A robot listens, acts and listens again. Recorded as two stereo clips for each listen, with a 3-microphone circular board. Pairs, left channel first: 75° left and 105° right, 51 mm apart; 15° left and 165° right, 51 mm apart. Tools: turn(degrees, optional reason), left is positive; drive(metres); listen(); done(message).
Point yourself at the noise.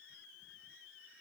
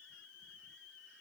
listen()
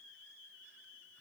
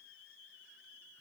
listen()
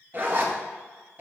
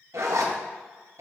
turn(degrees=-155, reason="The zipper: 155° right.")
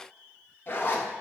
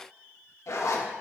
turn(degrees=25, reason="The zipper is now 25° left.")
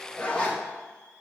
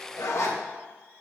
done("Found it: a zipper, straight ahead.")